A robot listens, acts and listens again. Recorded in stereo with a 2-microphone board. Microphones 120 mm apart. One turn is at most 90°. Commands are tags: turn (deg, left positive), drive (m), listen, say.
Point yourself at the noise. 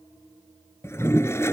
<turn deg="20"/>
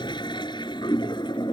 <turn deg="90"/>
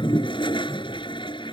<turn deg="45"/>
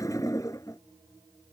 <turn deg="30"/>
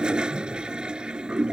<turn deg="-10"/>
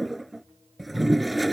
<say>Found it: a toilet flushing, straight ahead.</say>